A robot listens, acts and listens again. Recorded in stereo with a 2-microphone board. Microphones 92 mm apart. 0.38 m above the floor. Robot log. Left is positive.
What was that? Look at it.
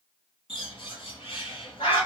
cmd yaw +90
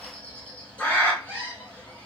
note: So it is at 15° left.
cmd yaw +15
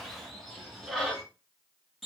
end: Found it: a bird, straight ahead.